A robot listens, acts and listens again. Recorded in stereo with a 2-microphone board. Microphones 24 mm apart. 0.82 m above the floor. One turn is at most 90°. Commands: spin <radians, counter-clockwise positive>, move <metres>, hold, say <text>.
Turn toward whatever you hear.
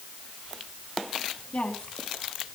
spin 0.96
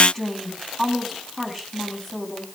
say Facing the woman speaking.